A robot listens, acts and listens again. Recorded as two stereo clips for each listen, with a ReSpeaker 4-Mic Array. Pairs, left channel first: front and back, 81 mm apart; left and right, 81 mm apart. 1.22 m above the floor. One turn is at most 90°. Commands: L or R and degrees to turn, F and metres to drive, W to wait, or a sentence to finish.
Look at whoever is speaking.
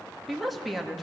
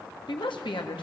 L90
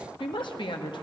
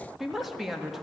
Facing the woman speaking, 1 to 2 m away.